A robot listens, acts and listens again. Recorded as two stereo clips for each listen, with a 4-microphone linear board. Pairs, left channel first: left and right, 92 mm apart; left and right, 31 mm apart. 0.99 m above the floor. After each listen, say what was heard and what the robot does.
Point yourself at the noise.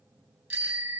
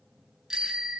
The bicycle bell: about 25° right or 155° right. Turn 25° right.
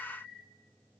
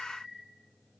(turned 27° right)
Facing the bicycle bell.